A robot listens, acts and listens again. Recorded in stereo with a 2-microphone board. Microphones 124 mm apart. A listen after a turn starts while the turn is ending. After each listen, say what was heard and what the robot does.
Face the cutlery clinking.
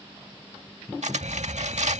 The cutlery clinking: about 65° right or 115° right. Turn 65° right.
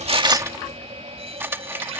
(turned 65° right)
So it is at 20° right. Turn 20° right.
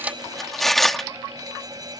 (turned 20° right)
Found it: cutlery clinking, straight ahead.